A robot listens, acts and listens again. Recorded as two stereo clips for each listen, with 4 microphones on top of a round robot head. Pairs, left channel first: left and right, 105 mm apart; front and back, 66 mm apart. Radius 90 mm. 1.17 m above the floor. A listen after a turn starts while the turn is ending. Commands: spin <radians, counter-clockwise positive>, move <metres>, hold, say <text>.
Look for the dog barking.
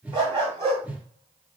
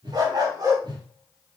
spin -2.09
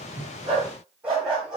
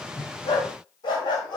say Facing the dog barking, 2 to 4 m away.